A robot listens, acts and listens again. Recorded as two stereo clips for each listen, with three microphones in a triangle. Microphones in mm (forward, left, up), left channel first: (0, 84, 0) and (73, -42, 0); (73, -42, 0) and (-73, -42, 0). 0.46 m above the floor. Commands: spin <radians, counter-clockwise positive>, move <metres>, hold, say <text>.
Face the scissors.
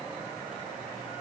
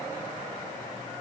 hold
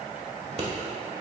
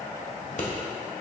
spin -0.44
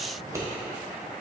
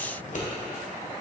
say Facing the scissors, 1 to 2 m away.